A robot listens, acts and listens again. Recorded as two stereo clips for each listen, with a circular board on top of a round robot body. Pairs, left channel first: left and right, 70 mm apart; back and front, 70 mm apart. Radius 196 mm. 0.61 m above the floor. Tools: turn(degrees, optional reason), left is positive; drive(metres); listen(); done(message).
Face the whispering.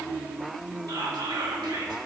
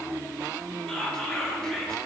turn(degrees=-100, reason="The whispering: 100° right.")
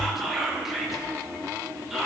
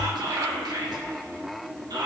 done("Found it: whispering, straight ahead, 1 to 2 m away.")